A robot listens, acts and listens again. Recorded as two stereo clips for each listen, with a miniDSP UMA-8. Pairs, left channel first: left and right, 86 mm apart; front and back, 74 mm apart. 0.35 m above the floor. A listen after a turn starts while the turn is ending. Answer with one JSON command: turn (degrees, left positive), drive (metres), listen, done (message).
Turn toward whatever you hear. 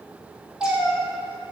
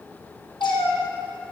{"turn": -10}
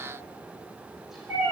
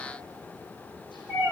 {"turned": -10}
{"done": "Facing the cat meowing."}